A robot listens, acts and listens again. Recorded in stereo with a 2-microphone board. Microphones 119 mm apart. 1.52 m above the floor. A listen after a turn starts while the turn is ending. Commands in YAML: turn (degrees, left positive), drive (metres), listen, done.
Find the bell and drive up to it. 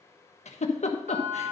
turn: -75
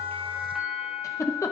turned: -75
drive: 1.0
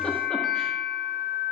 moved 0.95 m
drive: 1.0
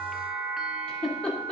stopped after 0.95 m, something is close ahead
done: "Arrived at the bell, straight ahead."